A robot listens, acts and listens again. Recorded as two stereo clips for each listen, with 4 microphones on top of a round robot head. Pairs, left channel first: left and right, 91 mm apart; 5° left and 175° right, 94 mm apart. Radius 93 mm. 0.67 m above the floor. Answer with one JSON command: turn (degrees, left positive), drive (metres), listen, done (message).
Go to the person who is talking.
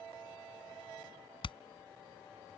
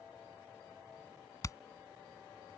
{"listen": true}
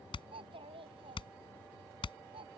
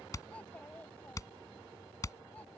{"turn": -70}
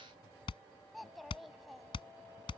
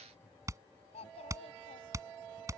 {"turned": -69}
{"drive": 1.0}
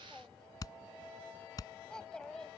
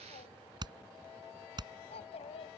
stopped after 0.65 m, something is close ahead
{"turn": 10}
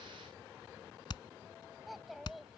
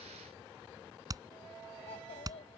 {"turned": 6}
{"done": "Something is in my way. I am facing the child speaking but have not reached it."}